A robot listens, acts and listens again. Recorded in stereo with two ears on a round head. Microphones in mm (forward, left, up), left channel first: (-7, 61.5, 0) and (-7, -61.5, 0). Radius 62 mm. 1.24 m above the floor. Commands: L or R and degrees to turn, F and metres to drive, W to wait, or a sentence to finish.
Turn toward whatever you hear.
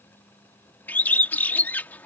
L30
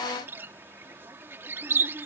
R15
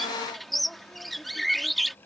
Facing the bird.